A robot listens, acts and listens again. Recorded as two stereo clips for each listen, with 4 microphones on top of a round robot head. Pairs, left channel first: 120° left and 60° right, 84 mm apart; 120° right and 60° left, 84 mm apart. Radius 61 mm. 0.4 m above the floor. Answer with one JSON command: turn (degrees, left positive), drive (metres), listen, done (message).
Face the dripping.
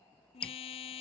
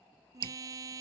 {"turn": 45}
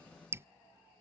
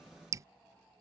{"done": "Found it: dripping, straight ahead."}